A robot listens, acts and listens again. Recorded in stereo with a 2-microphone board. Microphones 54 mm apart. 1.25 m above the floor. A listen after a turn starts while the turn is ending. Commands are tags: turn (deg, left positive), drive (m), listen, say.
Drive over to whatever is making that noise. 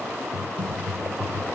<turn deg="-55"/>
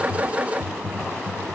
<drive m="1.0"/>
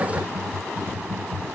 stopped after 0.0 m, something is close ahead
<turn deg="-10"/>
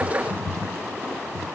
<say>Blocked. The typing on a keyboard is further on, straight ahead.</say>